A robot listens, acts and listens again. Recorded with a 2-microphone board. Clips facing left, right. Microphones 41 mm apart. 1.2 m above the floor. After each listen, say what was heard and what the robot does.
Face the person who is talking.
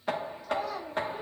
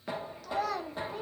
Turn 90° right.
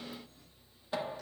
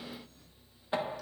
Keep listening.
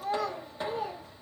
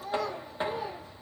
The child speaking is now 40° left. Turn 40° left.
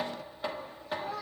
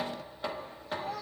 The child speaking is now 20° left. Turn 20° left.
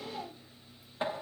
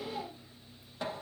Found it: a child speaking, straight ahead.